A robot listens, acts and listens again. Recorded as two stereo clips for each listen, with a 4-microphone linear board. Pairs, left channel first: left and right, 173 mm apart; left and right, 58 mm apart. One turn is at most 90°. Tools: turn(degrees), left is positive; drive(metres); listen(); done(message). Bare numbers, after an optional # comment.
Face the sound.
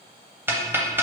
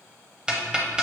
turn(-30)
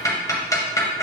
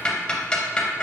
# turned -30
# So it is at 20° left.
turn(20)
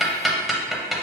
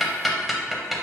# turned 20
done("Found it: ticking, straight ahead, under 1 m away.")